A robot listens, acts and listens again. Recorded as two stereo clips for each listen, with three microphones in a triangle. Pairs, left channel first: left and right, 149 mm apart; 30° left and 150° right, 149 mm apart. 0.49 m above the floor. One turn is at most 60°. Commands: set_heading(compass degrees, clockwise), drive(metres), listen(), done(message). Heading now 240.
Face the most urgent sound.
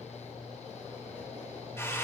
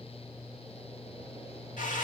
listen()
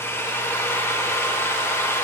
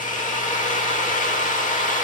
listen()
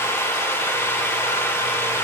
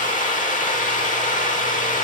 done("I can't make out anything urgent, only a drill.")